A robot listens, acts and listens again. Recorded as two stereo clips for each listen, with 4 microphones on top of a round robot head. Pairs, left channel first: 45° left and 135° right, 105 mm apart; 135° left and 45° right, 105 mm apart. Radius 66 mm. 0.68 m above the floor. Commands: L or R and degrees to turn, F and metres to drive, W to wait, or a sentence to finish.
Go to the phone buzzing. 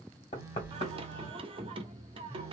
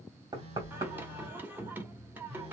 R65
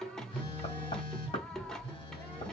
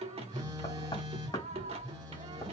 F1.0
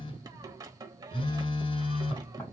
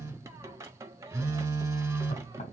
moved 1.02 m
L15
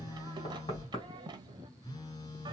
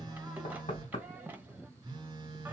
F1.0
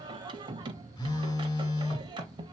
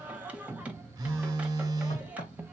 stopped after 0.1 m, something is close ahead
I am next to the phone buzzing.